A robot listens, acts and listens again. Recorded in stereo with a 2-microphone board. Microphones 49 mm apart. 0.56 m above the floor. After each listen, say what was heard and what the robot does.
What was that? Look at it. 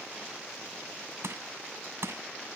The crushing: about 70° right or 110° right. Turn 70° right.
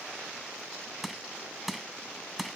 Facing the crushing.